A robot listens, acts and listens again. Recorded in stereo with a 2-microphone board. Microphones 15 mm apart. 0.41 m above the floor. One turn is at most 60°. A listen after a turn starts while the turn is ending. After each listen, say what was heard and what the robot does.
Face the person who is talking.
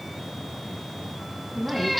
The woman speaking: about 70° right or 110° right. Turn 60° right.
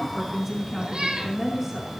So it is at 20° right. Turn 20° right.
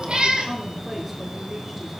The woman speaking is now 10° right. Turn 10° right.
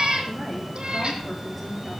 Found it: a woman speaking, straight ahead.